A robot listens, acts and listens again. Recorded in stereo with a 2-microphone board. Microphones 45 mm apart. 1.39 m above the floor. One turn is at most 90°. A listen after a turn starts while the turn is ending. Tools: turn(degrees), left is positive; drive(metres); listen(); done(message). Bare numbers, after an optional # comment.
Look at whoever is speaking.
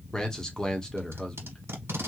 # The man speaking: about 15° left or 165° left.
turn(15)
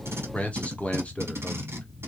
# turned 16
# So it is at 150° left.
turn(90)
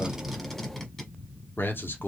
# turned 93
# The man speaking is now 55° left.
turn(55)
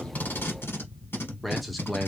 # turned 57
done("Found it: a man speaking, straight ahead, under 1 m away.")